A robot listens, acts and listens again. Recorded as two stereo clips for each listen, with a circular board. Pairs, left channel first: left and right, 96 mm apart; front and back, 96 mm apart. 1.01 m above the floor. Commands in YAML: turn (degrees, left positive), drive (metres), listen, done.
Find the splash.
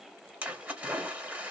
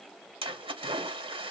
turn: -165
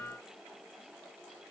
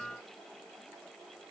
done: "Facing where the splash came from. I can't hear it now."